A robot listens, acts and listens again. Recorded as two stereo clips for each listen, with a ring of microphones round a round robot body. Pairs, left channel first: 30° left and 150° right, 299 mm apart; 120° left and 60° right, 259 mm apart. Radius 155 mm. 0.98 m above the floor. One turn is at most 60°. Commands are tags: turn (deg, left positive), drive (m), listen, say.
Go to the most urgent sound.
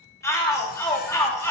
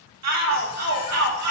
<turn deg="-50"/>
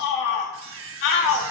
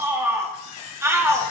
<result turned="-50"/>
<turn deg="20"/>
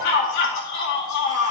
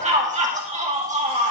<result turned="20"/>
<drive m="1.0"/>
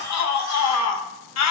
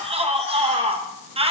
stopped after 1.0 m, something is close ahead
<say>Arrived at the shout, straight ahead.</say>